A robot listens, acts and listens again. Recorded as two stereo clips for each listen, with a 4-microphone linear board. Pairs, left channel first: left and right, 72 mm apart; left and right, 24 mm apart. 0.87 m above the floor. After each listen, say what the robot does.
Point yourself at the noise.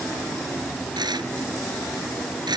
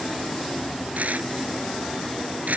Turn 90° right.
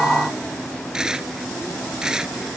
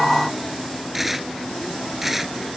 Turn 10° right.
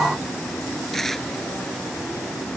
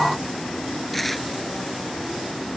Found it: tearing paper, straight ahead.